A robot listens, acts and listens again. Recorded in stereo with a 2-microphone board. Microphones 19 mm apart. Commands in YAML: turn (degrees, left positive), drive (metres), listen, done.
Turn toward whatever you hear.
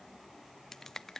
turn: 20
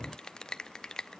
turn: 135
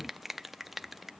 turn: -10
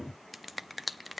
done: "Facing the finger snap, under 1 m away."